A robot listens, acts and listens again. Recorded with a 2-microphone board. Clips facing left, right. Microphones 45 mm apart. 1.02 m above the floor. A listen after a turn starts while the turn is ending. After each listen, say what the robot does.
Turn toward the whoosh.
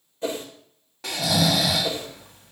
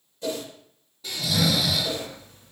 Turn 30° left.
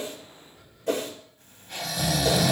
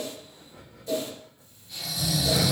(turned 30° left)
Turn 110° left.
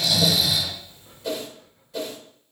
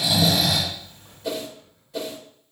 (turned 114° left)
Facing the whoosh, 1 to 2 m away.